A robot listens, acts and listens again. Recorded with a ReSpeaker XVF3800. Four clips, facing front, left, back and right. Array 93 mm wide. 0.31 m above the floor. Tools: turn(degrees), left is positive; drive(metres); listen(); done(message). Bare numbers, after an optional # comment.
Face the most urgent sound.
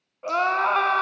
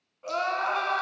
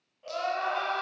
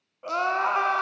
# The crying: 25° right.
turn(-25)
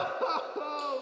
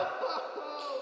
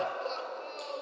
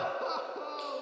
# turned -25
done("Facing the crying.")